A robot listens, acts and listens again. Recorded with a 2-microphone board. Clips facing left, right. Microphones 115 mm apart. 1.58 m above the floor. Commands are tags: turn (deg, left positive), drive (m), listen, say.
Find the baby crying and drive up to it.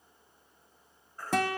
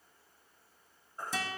<turn deg="-25"/>
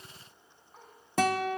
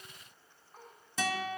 <drive m="1.0"/>
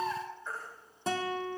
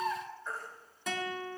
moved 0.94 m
<drive m="1.0"/>
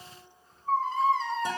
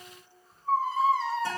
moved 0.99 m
<drive m="1.0"/>
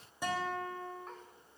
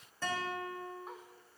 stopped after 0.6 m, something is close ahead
<listen/>
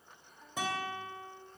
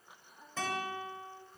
<listen/>
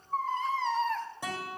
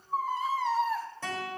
<turn deg="-10"/>
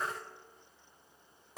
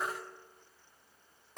<say>Arrived at the baby crying, straight ahead.</say>